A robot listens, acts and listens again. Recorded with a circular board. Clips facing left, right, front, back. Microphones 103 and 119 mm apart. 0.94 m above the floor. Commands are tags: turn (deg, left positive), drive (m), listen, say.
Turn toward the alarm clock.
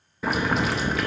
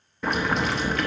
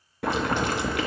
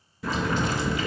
<listen/>
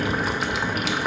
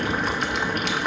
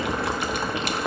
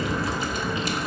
<listen/>
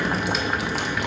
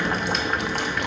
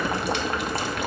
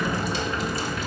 <say>I can't make out an alarm clock, only boiling.</say>